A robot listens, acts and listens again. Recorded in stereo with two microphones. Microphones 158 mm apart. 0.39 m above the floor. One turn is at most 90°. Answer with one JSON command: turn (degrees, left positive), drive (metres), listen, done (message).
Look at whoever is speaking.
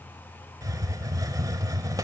{"listen": true}
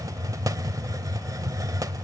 {"listen": true}
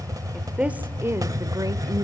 {"turn": -30}
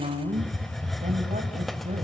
{"turn": -90}
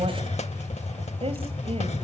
{"turn": -40}
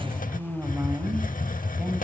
{"turn": -10}
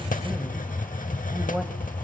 {"listen": true}
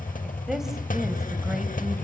{"listen": true}
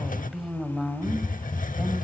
{"done": "Found it: a woman speaking, straight ahead."}